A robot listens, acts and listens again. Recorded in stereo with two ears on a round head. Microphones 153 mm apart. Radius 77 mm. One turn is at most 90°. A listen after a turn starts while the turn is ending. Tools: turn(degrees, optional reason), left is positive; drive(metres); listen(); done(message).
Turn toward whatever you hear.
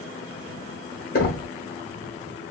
turn(degrees=55, reason="The knocking: about 55° left or 125° left.")
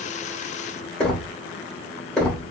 done("Facing the knocking.")